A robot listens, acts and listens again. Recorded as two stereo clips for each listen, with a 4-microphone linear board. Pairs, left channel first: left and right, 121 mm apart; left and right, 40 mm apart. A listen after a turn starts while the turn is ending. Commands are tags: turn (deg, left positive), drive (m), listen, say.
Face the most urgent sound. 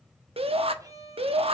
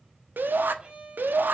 <turn deg="-60"/>
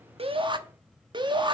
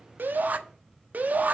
<turn deg="-50"/>
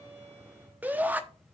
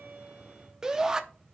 <turn deg="-15"/>
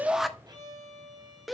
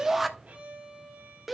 <say>Facing the shout, 1 to 2 m away.</say>